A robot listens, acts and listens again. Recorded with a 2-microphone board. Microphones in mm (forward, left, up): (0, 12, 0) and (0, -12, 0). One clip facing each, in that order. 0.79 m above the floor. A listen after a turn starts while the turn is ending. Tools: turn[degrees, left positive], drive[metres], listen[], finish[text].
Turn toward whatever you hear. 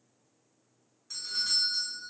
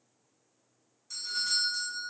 Thought: The doorbell: about 20° left or 160° left.
Action: turn[20]
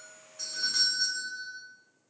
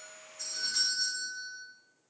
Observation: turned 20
Thought: So it is at 135° left.
Action: turn[135]
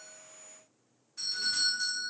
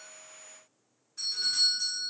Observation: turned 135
Thought: The doorbell is now 10° left.
Action: turn[10]
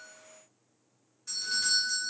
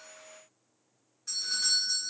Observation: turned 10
Action: finish[Found it: a doorbell, straight ahead, 1 to 2 m away.]